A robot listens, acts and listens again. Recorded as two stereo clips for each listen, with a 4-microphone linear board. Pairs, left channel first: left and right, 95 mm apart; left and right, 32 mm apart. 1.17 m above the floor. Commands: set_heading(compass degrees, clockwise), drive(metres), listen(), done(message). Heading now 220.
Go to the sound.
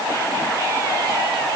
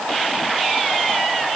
listen()
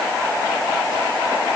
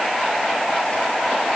listen()
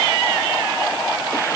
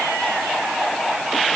done("I can't make out anything.")